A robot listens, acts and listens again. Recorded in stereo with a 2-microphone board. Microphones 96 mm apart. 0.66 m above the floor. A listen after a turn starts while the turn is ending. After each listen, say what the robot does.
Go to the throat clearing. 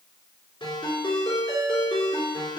Keep listening.
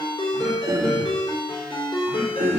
Turn 60° right.
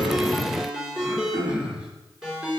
Turn 15° right.
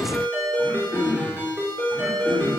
Drive 1.0 m forward.
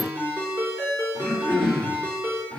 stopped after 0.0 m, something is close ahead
Blocked. The throat clearing is further on, straight ahead.